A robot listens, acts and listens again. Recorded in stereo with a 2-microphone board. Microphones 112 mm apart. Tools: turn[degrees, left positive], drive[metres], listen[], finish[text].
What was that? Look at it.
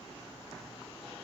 Action: listen[]
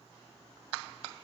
Action: listen[]
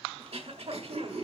Thought: The throat clearing: about 65° right or 115° right.
Action: turn[-65]
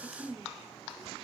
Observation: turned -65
Action: finish[Facing the throat clearing, 1 to 2 m away.]